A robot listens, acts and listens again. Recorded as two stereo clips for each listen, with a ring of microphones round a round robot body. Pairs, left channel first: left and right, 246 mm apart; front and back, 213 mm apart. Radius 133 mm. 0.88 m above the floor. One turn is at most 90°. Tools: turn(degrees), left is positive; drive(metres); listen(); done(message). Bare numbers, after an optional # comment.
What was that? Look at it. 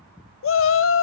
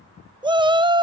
# The shout: 115° left.
turn(90)
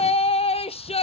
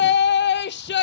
# The shout is now 25° left.
turn(25)
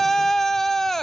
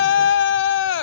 done("Found it: a shout, straight ahead.")